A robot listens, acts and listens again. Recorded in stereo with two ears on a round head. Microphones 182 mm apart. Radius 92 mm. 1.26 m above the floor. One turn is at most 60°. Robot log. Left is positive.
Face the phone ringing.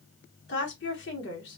cmd idle
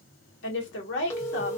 cmd yaw +30
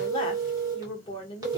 note: So it is at 15° right.
cmd yaw -15
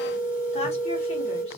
note: The phone ringing is now 10° right.
cmd yaw -10
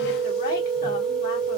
end: Found it: a phone ringing, straight ahead, under 1 m away.